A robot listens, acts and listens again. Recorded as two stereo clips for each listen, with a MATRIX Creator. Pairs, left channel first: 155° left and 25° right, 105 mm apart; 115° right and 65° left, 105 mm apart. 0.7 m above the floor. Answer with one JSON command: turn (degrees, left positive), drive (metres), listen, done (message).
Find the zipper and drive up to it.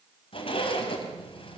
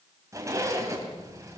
{"turn": 130}
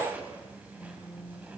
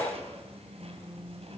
{"turn": 55}
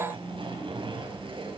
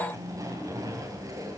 {"turn": 15}
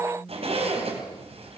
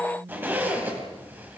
{"drive": 1.0}
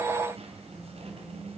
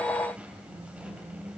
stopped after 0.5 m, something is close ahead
{"turn": -10}
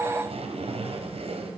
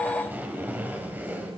{"done": "Something is in my way. I am facing the zipper but have not reached it."}